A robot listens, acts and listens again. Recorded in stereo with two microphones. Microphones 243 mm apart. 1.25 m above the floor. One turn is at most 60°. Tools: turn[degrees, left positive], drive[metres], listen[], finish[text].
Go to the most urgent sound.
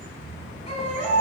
Thought: The baby crying: about 25° left or 155° left.
Action: turn[25]
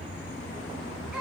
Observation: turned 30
Action: drive[1.0]
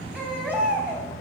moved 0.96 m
Action: drive[1.0]
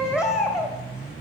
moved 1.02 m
Action: drive[1.0]
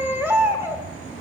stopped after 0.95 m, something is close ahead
Thought: The baby crying is now 10° right.
Action: turn[-10]
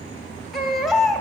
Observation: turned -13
Action: finish[Arrived at the baby crying, straight ahead.]